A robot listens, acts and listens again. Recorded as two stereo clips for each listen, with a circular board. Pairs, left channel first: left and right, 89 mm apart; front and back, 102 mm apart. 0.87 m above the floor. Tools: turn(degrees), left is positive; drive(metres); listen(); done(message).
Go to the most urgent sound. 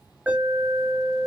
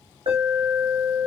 turn(degrees=-160)
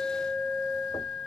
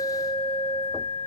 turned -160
drive(metres=1.0)
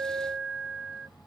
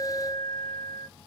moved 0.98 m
drive(metres=1.0)
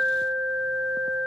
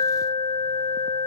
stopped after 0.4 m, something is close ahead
done("I am next to the alarm.")